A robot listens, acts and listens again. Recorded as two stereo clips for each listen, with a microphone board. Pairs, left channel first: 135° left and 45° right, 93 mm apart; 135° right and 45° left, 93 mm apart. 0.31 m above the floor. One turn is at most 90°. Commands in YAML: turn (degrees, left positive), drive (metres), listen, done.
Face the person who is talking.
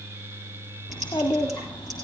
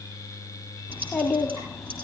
turn: 90
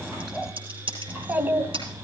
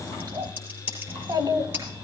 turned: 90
turn: 15
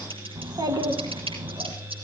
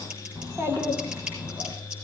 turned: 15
turn: -20
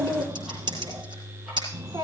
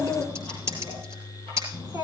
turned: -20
done: "Found it: a child speaking, straight ahead."